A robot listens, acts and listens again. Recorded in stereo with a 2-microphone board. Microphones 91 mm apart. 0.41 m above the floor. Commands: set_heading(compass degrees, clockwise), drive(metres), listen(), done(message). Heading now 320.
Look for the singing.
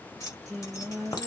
set_heading(290)
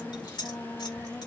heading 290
set_heading(145)
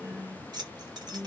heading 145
set_heading(175)
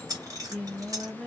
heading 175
set_heading(190)
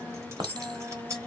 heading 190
done("Found it: singing, straight ahead, 1 to 2 m away.")